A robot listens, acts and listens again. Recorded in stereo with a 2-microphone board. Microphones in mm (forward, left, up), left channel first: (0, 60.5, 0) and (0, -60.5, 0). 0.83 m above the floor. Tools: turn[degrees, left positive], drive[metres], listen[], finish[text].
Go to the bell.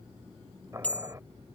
Action: turn[30]
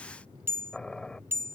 Thought: So it is at 20° right.
Action: turn[-20]
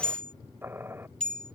Action: drive[1.0]
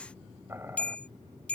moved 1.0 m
Thought: The bell is now 10° left.
Action: turn[10]
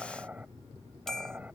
Action: drive[1.0]
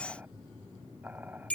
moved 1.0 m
Thought: The bell is now 10° left.
Action: turn[10]
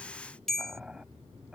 Action: drive[1.0]
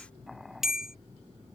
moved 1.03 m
Action: drive[1.0]
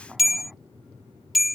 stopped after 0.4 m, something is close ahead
Action: finish[I am next to the bell.]